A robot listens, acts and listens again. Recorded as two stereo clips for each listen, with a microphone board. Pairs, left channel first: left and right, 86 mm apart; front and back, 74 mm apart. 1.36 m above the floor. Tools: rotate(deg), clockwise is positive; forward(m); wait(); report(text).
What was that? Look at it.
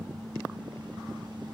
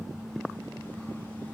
wait()
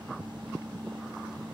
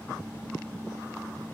wait()
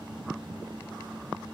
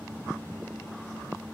report("I can't make out anything to turn to.")